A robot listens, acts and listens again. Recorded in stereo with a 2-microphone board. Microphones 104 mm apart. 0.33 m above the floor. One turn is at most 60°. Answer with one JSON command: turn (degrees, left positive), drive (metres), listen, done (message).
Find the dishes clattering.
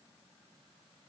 {"listen": true}
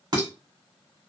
{"turn": -50}
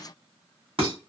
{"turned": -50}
{"turn": -60}
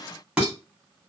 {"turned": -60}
{"turn": -10}
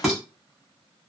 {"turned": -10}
{"done": "Facing the dishes clattering."}